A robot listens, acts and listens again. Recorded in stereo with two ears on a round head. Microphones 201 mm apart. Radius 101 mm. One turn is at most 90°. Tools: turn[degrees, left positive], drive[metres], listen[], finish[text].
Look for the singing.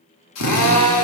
Action: listen[]
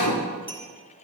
Action: listen[]
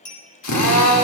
Action: finish[I can't make out singing, only a clink and a drill.]